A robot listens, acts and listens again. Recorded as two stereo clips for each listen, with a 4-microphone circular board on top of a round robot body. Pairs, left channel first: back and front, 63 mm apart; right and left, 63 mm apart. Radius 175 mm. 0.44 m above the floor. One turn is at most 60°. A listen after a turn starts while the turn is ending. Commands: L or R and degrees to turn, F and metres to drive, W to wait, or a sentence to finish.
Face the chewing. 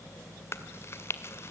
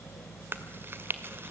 L60
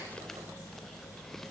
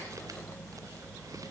L60
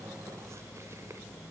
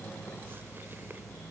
L20
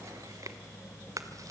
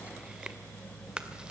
Facing where the chewing came from. I can't hear it now.